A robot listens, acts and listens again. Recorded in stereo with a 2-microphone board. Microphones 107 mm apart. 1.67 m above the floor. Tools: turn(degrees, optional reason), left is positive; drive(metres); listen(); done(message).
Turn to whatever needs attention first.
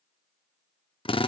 listen()
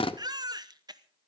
turn(degrees=-40, reason="The baby crying: about 40° right or 140° right.")
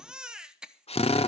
turn(degrees=-10, reason="So it is at 10° right.")
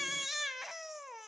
done("Facing the baby crying, under 1 m away.")